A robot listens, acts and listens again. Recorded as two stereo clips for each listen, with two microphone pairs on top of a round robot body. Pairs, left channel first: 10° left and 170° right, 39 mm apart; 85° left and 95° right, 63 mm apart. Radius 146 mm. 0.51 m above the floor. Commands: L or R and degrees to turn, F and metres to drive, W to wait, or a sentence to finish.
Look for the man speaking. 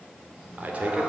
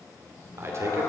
R125
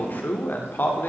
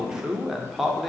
R15
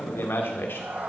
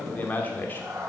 L20
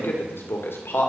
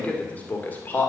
L20
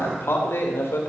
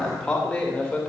Found it: a man speaking, straight ahead, 2 to 4 m away.